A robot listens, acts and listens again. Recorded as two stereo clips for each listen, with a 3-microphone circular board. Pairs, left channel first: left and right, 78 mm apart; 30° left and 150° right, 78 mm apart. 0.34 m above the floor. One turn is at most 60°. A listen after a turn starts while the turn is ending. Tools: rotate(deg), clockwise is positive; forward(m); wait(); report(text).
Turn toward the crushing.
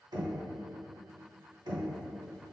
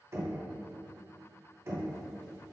wait()
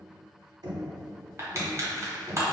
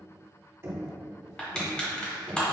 rotate(45)
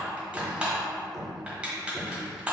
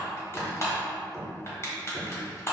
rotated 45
rotate(15)
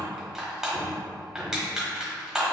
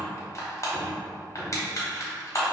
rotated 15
rotate(10)
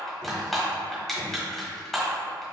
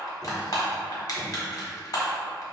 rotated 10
report("Found it: crushing, straight ahead.")